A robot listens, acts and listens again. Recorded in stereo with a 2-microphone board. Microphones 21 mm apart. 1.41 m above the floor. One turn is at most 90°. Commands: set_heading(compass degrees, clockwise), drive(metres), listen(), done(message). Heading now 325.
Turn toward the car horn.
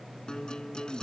listen()
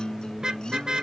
set_heading(0)
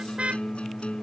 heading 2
set_heading(92)
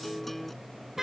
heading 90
set_heading(110)
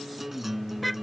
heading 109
done("Facing the car horn.")